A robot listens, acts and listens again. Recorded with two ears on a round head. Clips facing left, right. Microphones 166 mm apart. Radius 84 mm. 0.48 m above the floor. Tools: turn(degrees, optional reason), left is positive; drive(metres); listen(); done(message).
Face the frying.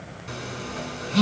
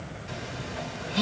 listen()
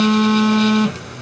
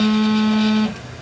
listen()
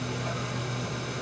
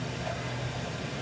done("I can't make out frying, only a phone buzzing.")